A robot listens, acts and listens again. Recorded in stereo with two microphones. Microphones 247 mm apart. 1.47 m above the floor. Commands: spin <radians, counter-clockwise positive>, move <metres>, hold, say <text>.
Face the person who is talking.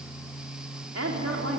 spin -1.57
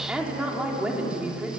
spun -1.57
say Found it: a woman speaking, straight ahead.